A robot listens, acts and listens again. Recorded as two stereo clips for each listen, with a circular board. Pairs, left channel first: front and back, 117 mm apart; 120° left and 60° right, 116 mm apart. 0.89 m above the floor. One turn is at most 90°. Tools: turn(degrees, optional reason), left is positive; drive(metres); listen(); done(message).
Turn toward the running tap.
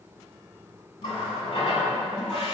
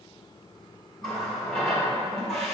turn(degrees=35, reason="The running tap: 35° left.")
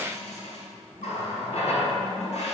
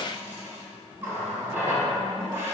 turn(degrees=10, reason="The running tap is now 10° left.")
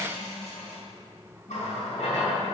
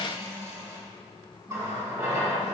done("Found it: a running tap, straight ahead, 1 to 2 m away.")